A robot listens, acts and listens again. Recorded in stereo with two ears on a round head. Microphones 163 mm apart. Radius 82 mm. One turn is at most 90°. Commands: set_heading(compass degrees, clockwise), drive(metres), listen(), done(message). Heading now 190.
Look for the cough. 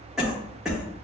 set_heading(220)
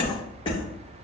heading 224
set_heading(194)
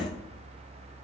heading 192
listen()
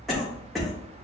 done("Found it: a cough, straight ahead.")